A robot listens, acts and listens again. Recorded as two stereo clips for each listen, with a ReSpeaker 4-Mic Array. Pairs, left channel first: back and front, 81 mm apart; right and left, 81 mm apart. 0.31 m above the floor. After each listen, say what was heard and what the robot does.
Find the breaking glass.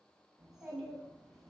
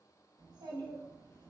Keep listening.
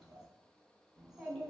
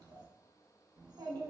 Keep listening.
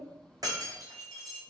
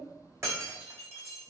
The breaking glass: 40° left. Turn 40° left.
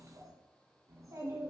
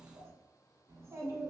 I heard breaking glass from this way, but can't make it out now.